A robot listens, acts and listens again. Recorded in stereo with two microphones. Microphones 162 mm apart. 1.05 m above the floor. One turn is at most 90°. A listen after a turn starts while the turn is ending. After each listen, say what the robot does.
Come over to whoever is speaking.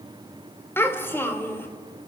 Turn 30° left.
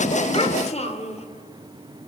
Turn 90° left.
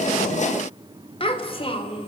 Turn 35° left.
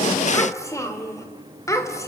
Turn 20° left.
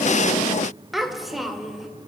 Drive 1.0 m forward.
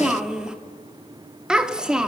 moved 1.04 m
Drive 1.0 m forward.
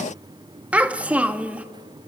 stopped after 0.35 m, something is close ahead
Turn 10° right.
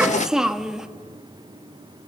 Arrived at the child speaking, straight ahead.